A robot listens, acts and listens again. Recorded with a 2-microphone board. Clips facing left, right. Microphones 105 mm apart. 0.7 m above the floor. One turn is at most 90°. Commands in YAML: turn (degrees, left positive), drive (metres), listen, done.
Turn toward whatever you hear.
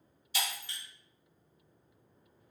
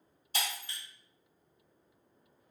turn: -50
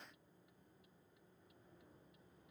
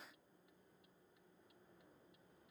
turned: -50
listen: true
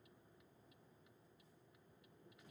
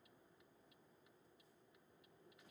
done: "I heard breaking glass, but can't make it out now. It was about straight ahead or 80° right."